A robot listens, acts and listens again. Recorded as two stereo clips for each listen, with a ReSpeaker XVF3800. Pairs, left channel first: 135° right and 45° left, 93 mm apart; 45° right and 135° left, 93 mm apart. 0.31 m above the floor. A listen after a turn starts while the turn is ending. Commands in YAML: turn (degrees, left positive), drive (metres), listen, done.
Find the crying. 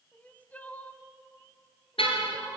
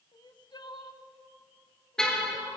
turn: -65
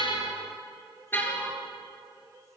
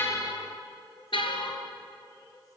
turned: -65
listen: true
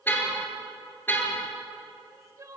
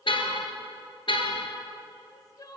done: "Found it: crying, straight ahead."